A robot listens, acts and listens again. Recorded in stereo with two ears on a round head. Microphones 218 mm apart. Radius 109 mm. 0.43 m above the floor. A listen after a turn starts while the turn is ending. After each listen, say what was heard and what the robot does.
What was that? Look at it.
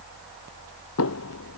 The knocking: about 65° left or 115° left. Turn 65° left.
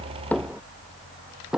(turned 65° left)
Found it: knocking, straight ahead.